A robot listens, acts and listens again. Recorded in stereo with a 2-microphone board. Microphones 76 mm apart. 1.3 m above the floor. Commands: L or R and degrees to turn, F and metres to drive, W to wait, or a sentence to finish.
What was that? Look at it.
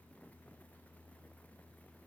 W
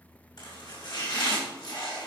L70
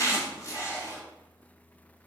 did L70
L40
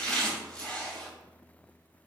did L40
L10
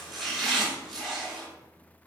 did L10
Found it: chopping, straight ahead, over 4 m away.